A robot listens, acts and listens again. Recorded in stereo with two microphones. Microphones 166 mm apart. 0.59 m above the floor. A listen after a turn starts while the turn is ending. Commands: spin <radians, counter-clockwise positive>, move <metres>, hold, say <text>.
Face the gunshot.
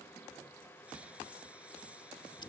hold
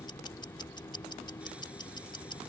hold
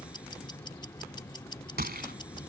spin -1.22
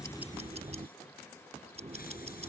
hold
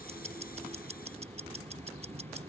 say I heard a gunshot, but can't make it out now. It was about straight ahead or 40° right.